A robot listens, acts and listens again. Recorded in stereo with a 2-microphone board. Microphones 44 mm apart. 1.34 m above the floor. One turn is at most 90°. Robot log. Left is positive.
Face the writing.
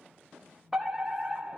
cmd idle
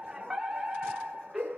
cmd idle
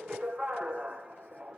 end: I can't make out writing, only a fire alarm.